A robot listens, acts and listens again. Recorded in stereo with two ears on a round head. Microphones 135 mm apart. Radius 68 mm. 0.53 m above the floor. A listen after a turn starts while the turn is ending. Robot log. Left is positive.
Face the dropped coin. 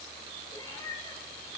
cmd idle
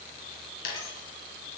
note: The dropped coin: about 75° left or 105° left.
cmd yaw +75
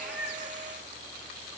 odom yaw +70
cmd idle
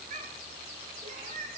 end: I heard a dropped coin, but can't make it out now. It was about 5° left or 35° left.